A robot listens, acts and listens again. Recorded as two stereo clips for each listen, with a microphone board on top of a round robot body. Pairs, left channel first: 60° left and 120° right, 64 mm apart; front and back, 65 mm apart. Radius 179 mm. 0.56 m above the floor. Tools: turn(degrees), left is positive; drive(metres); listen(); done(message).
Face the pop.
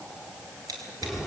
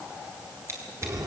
listen()
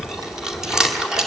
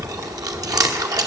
listen()
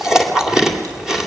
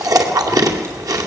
done("I can't make out a pop, only chewing and scissors.")